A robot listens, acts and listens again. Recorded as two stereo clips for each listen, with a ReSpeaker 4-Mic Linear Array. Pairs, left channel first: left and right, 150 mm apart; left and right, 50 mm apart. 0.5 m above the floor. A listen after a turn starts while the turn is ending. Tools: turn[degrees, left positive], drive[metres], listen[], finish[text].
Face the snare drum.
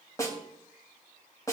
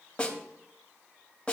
Thought: The snare drum: about 20° left or 160° left.
Action: turn[20]
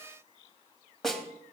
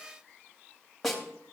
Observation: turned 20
Action: finish[Found it: a snare drum, straight ahead, 2 to 4 m away.]